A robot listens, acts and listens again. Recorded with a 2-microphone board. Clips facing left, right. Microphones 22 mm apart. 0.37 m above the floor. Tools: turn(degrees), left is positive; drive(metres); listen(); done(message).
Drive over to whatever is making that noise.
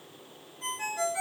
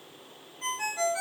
turn(degrees=-25)
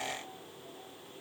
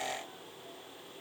listen()
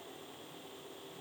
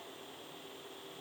listen()
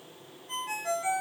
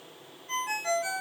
turn(degrees=-130)
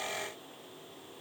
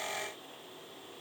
listen()
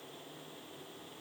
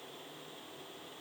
listen()
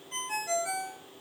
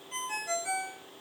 drive(metres=1.0)
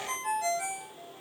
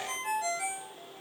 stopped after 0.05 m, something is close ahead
done("Blocked. The ringtone is further on, straight ahead.")